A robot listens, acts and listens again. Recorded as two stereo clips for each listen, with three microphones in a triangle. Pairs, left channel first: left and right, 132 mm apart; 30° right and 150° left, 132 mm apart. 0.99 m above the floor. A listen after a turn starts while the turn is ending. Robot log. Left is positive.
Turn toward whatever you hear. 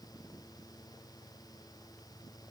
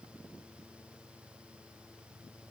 cmd idle
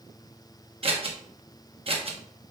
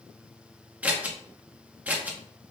note: The scissors: 130° right.
cmd yaw -130
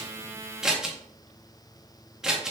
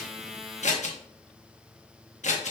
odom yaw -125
end: Found it: scissors, straight ahead.